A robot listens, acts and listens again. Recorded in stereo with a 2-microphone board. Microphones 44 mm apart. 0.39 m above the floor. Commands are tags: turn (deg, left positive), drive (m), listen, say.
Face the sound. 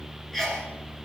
<turn deg="30"/>
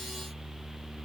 <listen/>
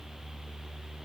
<say>I heard a sneeze, but can't make it out now. It was about 25° right or 145° left.</say>